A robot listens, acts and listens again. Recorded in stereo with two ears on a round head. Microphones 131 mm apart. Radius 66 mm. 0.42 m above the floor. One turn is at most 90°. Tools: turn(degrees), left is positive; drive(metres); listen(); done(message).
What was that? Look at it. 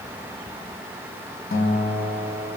turn(degrees=65)
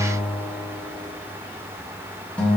turn(degrees=10)
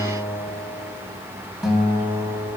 done("Facing the guitar, 2 to 4 m away.")